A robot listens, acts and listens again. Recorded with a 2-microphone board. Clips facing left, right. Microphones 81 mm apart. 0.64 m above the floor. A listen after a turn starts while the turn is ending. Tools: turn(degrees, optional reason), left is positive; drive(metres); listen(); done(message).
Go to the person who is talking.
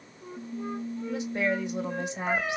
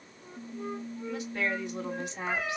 turn(degrees=20, reason="The woman speaking: about 20° left or 160° left.")
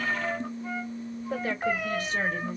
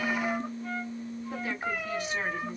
listen()
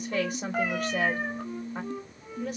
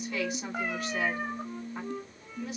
listen()
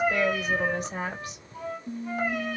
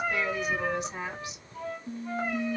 turn(degrees=135, reason="So it is at 135° left.")
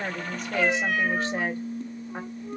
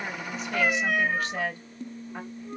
turn(degrees=30, reason="The woman speaking is now 30° left.")
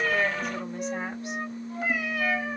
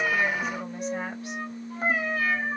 listen()
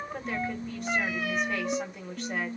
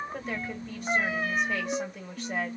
drive(metres=1.0)
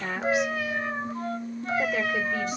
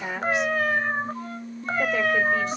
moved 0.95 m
drive(metres=1.0)
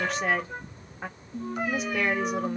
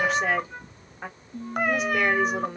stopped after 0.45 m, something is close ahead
done("Arrived at the woman speaking, straight ahead.")